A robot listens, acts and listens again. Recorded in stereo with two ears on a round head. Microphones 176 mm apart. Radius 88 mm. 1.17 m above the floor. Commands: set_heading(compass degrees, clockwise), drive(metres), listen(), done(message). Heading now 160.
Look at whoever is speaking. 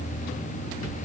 listen()
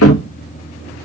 listen()
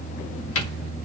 done("I can't make out anyone speaking, only a cupboard door.")